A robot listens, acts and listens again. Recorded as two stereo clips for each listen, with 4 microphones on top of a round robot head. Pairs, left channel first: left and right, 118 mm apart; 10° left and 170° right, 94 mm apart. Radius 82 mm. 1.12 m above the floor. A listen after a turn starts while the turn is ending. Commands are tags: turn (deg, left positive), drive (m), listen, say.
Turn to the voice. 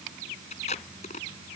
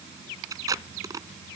<listen/>
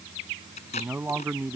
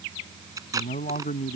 <turn deg="-15"/>
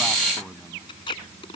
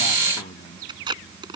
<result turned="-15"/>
<say>Found it: a man speaking, straight ahead.</say>